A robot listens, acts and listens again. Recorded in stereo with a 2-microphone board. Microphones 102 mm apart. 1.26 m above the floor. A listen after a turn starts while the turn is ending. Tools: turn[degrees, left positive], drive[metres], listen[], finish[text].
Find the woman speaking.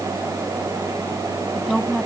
Action: turn[30]
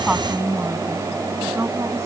Thought: So it is at 30° right.
Action: turn[-30]
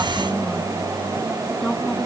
Action: listen[]
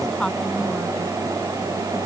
Action: finish[Facing the woman speaking.]